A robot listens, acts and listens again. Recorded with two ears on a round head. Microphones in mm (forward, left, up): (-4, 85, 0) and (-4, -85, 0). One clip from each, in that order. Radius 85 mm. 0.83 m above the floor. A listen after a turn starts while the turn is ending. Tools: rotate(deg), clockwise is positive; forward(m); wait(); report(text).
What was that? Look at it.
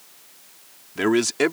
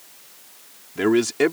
rotate(-25)
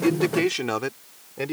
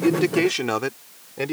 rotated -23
report("Facing the man speaking.")